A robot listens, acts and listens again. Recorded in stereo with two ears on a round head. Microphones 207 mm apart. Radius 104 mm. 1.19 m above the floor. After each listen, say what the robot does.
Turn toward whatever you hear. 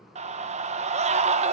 Turn 30° right.
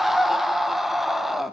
Facing the scream.